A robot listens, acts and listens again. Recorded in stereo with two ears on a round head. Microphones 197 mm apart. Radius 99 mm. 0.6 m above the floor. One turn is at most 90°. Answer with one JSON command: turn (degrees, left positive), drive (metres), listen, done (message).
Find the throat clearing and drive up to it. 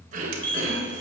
{"turn": -40}
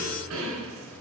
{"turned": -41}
{"turn": -90}
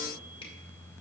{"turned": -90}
{"turn": -10}
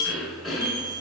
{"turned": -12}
{"drive": 1.0}
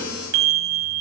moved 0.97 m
{"listen": true}
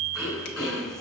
{"drive": 1.0}
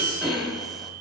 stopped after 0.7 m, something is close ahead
{"done": "I am next to the throat clearing."}